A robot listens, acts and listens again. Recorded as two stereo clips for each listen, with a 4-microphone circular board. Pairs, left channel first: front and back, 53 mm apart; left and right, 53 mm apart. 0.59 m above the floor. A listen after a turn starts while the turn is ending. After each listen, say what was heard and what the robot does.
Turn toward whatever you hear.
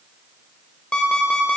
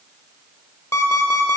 The alarm clock: 70° left. Turn 70° left.
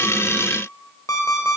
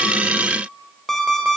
The alarm clock is now 10° left. Turn 10° left.
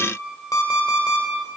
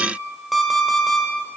Facing the alarm clock, 1 to 2 m away.